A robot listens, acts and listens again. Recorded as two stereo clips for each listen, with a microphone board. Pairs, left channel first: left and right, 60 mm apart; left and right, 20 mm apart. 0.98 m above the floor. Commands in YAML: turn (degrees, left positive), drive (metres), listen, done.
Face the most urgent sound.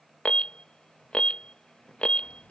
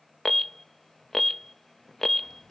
turn: 20
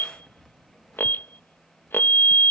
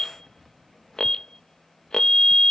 turn: 140
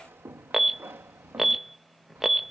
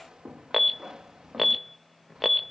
done: "Found it: an alarm, straight ahead."